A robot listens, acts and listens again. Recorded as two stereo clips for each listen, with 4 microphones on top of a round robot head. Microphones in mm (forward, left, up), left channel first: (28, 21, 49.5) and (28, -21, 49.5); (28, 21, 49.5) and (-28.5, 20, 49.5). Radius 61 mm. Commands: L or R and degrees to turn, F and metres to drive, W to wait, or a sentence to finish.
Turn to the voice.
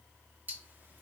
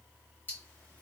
W
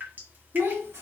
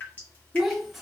R90
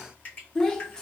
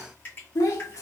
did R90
L15
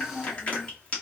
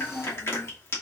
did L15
Facing the child speaking.